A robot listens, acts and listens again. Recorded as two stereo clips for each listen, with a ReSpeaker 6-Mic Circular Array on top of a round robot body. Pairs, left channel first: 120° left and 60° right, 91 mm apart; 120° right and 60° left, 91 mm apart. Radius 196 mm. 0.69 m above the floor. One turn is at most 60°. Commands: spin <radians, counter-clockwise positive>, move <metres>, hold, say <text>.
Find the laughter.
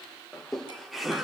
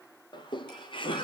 spin -1.05
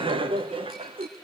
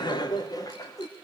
spin -1.05
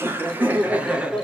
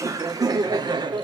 spin 0.35
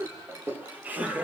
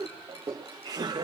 spin 0.26
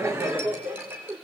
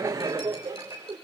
say Facing the laughter, 2 to 4 m away.